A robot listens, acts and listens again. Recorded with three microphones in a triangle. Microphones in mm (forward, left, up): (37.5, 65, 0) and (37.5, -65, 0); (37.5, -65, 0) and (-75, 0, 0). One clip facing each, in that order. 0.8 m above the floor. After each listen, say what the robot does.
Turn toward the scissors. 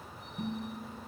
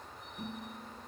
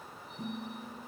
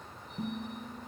Keep listening.
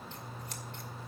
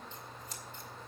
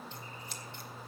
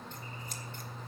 Turn 110° left.
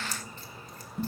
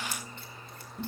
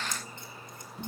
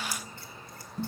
Keep listening.
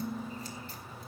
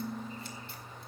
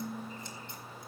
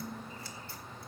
Keep listening.
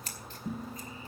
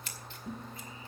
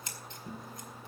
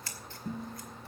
Turn 40° left.
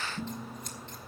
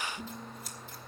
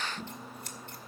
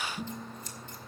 Keep listening.
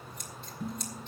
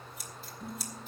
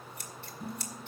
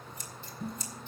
Found it: scissors, straight ahead, 2 to 4 m away.